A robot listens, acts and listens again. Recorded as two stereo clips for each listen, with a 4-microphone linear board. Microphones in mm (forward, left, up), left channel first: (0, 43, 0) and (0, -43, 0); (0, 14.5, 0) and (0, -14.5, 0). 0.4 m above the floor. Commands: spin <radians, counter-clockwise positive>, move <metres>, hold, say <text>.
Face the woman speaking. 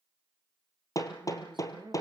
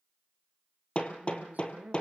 spin -1.22
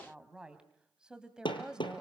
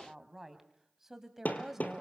spin -0.17
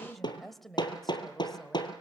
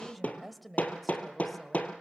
say Facing the woman speaking.